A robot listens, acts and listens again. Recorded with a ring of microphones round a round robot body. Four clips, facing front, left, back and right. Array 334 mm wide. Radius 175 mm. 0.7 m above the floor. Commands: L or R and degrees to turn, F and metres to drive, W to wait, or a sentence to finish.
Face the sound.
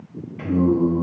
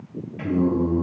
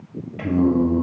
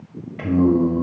R150
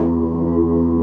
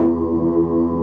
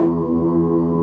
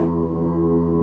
L40
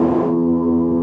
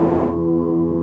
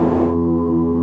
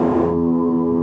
L10
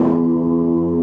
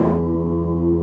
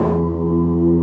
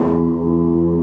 Found it: singing, straight ahead, 2 to 4 m away.